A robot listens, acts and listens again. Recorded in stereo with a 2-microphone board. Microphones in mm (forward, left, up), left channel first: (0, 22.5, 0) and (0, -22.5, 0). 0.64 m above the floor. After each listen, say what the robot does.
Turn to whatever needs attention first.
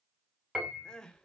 Turn 15° left.
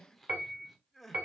Facing the crying.